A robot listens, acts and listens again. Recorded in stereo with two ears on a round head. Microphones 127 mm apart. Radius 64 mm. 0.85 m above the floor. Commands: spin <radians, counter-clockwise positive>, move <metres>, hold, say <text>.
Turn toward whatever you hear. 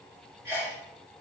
spin -0.35
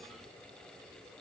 hold
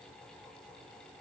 say I heard a sneeze, but can't make it out now. It was about straight ahead or 140° right.